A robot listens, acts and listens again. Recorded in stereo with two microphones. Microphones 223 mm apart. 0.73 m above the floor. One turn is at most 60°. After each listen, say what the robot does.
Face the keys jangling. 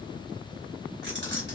Turn 50° right.
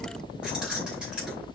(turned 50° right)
Found it: keys jangling, straight ahead, 2 to 4 m away.